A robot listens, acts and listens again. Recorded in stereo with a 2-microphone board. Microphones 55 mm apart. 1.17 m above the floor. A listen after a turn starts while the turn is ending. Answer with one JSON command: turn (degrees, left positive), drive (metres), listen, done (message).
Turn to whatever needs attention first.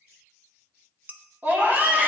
{"turn": -35}
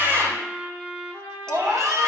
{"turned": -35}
{"turn": -110}
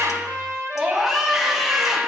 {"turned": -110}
{"done": "Facing the scream."}